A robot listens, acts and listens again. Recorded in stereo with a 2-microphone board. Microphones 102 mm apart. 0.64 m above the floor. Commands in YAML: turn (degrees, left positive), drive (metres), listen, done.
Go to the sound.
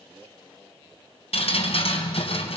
turn: 90
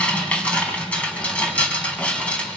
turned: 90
turn: 10
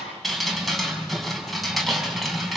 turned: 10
drive: 1.0
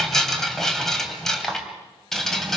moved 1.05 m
drive: 1.0
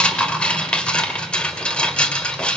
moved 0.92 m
turn: 10
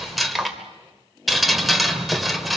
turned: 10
drive: 1.0
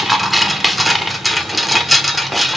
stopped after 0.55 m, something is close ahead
done: "Arrived at the dripping, straight ahead."